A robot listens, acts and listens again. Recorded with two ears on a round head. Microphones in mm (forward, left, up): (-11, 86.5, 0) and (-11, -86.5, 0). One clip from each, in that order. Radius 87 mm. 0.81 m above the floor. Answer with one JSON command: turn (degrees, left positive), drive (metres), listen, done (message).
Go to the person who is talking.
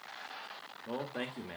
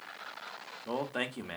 {"turn": -35}
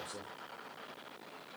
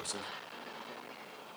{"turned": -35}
{"turn": -110}
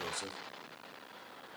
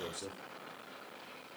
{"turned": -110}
{"turn": 30}
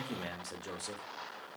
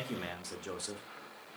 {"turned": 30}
{"drive": 1.0}
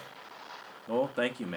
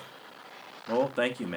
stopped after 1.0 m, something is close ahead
{"done": "I am next to the man speaking."}